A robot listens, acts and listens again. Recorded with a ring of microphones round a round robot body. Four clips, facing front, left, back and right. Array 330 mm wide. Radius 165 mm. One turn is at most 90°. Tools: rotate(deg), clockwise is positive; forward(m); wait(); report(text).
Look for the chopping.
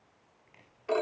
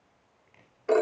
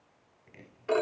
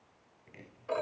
rotate(90)
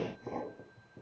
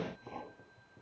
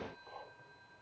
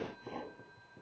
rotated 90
rotate(15)
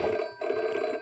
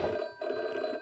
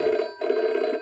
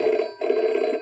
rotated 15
wait()
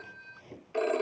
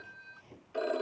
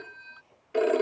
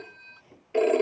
report("Facing the chopping.")